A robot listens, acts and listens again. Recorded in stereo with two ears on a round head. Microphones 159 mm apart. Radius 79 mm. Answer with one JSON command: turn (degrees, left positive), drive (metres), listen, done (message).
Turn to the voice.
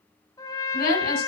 {"turn": 60}
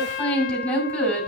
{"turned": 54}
{"turn": 10}
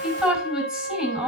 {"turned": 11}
{"done": "Facing the woman speaking."}